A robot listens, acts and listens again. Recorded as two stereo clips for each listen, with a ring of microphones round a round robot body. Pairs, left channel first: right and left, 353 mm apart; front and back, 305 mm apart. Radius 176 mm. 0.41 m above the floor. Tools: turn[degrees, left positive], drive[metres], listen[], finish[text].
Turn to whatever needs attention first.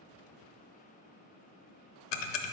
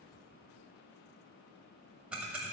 Action: listen[]
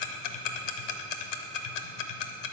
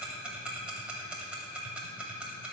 Action: listen[]
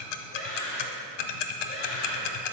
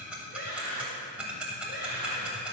Thought: The scream: 65° right.
Action: turn[-65]
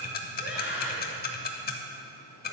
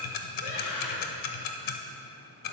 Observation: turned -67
Action: finish[Found it: a scream, straight ahead, 2 to 4 m away.]